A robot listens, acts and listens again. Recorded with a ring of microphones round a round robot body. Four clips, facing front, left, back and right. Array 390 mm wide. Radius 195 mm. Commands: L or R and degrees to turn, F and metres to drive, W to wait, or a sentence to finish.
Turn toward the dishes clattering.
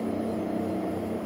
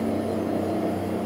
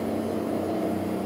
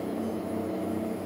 W
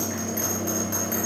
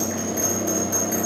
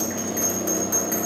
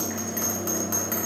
W
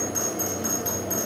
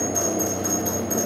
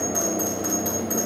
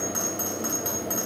I can't make out dishes clattering, only a bell.